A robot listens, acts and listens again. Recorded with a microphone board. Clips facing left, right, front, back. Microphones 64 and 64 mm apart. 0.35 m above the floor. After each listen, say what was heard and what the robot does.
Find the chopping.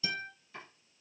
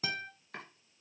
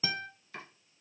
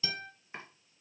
The chopping: 115° right. Turn 115° right.
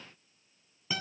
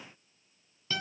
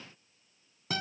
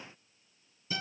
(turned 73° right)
Nothing new. It was at 45° right. Turn 45° right.
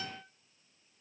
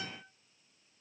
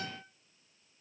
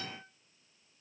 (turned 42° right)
Keep listening.
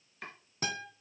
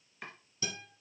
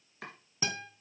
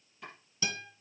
Found it: chopping, straight ahead.